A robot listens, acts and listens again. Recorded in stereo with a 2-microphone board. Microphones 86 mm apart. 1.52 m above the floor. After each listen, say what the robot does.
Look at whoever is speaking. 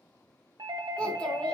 Turn 30° left.
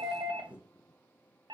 Turn 15° right.
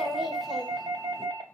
Facing the child speaking, 1 to 2 m away.